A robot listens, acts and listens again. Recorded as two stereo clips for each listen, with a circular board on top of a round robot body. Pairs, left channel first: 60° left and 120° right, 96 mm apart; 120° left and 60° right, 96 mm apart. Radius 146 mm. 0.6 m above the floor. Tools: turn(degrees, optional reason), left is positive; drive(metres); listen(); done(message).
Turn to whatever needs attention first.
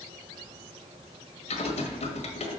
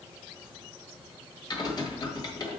listen()
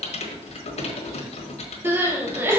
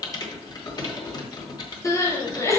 turn(degrees=175, reason="The crying: 175° left.")
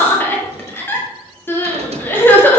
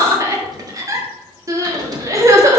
done("Facing the crying.")